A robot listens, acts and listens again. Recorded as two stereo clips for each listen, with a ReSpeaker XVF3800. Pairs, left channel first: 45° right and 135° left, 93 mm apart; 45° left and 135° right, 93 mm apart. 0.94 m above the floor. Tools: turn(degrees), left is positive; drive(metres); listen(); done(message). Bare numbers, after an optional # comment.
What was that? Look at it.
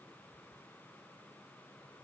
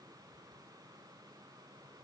listen()
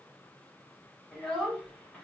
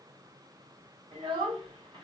# The child speaking: 130° right.
turn(-130)
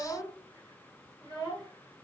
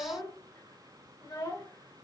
done("Facing the child speaking, 2 to 4 m away.")